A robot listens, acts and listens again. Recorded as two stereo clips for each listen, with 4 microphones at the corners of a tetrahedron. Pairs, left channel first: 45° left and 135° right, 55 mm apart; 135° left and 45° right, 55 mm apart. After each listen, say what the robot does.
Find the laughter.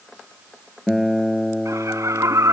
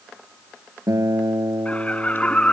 Turn 160° right.
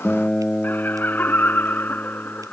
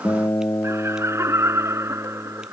Turn 10° right.
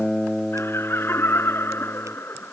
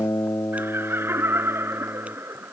Facing the laughter.